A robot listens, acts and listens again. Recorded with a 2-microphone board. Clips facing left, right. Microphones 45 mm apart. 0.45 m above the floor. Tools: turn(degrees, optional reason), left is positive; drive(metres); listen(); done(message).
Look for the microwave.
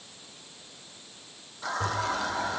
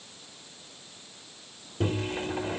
turn(degrees=-50, reason="The microwave: about 50° right or 130° right.")
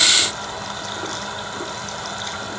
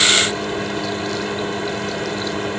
turn(degrees=-60, reason="So it is at 60° right.")
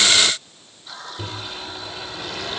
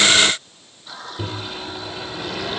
turn(degrees=-10, reason="The microwave is now 10° right.")
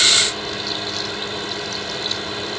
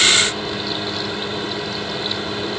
done("Facing the microwave.")